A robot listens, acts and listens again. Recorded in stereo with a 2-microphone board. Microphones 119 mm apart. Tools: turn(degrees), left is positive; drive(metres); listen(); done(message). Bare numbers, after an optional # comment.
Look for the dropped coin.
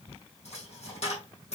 # The dropped coin: about 65° left or 115° left.
turn(65)
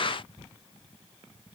listen()
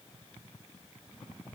done("I heard a dropped coin, but can't make it out now. It was about straight ahead or 50° left.")